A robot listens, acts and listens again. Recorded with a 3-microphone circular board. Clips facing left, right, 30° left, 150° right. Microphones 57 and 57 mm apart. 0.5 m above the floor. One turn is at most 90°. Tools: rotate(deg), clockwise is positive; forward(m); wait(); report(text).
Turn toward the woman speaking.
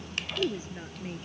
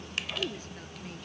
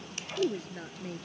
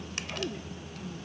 rotate(-25)
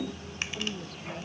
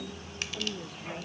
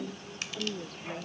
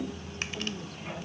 wait()
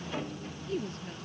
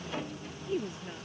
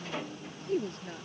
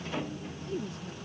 rotate(10)
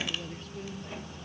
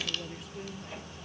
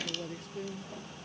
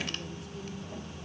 wait()
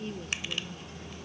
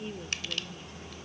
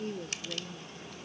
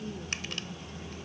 report("Found it: a woman speaking, straight ahead.")